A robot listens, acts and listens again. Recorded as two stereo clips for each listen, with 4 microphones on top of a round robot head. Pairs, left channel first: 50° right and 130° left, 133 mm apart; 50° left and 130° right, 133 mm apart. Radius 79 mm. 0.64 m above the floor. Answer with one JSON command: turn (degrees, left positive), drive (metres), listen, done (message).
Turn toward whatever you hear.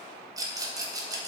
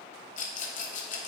{"turn": 70}
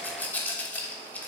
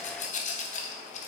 {"turn": 25}
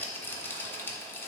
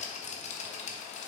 {"turn": 25}
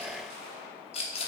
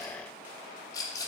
{"turn": -10}
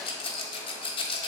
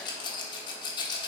{"done": "Facing the rattle."}